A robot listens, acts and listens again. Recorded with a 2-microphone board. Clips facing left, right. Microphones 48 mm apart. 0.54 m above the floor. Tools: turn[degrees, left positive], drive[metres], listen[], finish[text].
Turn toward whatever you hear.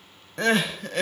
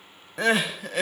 Action: turn[-30]
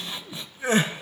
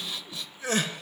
Thought: So it is at 25° left.
Action: turn[25]
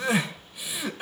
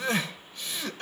Thought: The crying is now 10° left.
Action: turn[10]
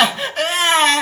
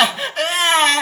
Action: finish[Facing the crying.]